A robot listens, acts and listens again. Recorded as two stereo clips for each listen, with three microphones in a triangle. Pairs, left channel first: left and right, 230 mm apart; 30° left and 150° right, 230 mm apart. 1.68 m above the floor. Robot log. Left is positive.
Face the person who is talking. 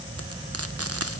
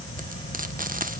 cmd idle
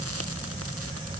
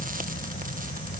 cmd idle
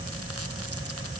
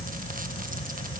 end: I can't make out anyone speaking.